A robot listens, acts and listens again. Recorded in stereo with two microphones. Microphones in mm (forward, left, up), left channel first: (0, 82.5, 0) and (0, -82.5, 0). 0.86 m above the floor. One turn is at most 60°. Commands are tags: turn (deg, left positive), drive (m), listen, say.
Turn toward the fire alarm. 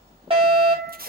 <turn deg="-35"/>
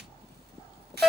<say>Facing the fire alarm.</say>